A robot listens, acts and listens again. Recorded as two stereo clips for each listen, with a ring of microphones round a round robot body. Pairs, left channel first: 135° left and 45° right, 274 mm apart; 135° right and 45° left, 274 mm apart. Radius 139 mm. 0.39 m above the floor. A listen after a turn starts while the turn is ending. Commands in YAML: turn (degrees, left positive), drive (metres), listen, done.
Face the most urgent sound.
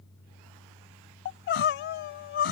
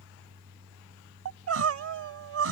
turn: 85
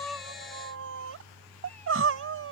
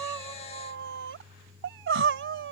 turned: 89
done: "Facing the crying."